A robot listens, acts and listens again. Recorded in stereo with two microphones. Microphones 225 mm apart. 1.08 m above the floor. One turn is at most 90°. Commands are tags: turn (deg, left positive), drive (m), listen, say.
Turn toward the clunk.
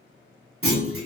<turn deg="-70"/>
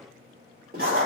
<listen/>
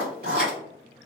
<say>I heard a clunk, but can't make it out now. It was about straight ahead or 40° right.</say>